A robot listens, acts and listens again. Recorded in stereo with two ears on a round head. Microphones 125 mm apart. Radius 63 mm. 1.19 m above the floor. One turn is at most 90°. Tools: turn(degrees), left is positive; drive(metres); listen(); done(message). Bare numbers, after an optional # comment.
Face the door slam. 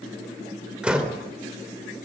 turn(-30)
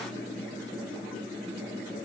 listen()
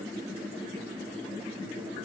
done("I heard a door slam, but can't make it out now. It was about 25° left or 145° right.")